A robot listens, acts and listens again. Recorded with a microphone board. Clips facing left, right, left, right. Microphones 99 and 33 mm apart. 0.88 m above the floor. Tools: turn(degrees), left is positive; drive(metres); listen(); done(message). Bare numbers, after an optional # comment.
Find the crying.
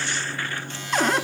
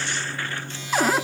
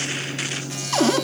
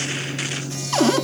listen()
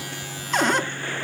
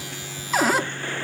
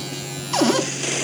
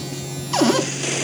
listen()
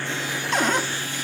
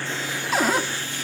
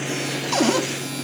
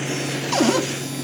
done("I can't make out crying to turn to.")